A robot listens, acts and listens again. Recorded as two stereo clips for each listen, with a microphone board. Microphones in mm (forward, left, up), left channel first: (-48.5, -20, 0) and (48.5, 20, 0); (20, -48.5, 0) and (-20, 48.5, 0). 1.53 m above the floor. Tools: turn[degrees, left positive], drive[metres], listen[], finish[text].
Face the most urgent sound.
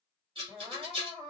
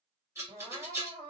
Thought: The crying: 100° left.
Action: turn[100]
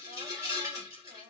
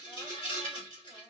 Action: listen[]
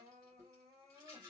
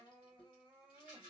Thought: The crying is now 20° left.
Action: turn[20]
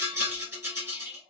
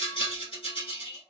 Action: listen[]
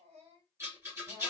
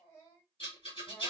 Thought: The crying is now 10° left.
Action: turn[10]
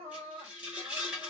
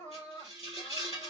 Action: finish[Found it: crying, straight ahead, 2 to 4 m away.]